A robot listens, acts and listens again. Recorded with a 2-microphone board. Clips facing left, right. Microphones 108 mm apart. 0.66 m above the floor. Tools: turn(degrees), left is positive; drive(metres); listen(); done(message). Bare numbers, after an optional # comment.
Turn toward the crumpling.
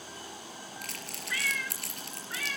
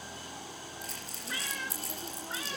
# The crumpling: about 75° left or 105° left.
turn(75)
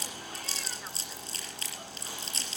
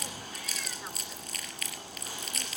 # So it is at 30° left.
turn(30)
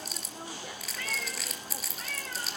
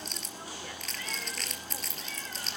done("Facing the crumpling.")